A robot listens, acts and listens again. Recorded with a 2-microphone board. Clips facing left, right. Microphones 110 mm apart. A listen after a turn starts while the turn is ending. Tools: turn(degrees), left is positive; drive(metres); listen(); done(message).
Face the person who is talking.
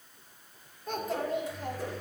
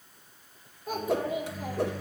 turn(degrees=-30)
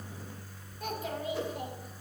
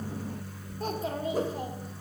turn(degrees=-145)
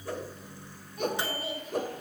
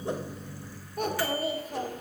turn(degrees=-45)
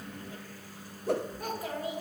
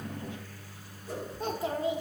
turn(degrees=-25)
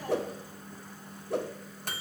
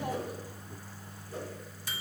listen()
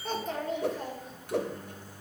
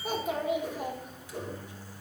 turn(degrees=-10)
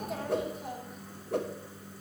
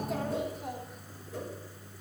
done("Facing the child speaking, 2 to 4 m away.")